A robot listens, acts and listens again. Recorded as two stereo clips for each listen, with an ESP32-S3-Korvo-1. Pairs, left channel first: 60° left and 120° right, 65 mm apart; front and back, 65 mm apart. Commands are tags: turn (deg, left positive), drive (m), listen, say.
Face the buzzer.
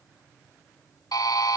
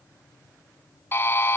<turn deg="50"/>
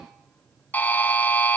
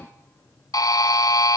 <say>Found it: a buzzer, straight ahead.</say>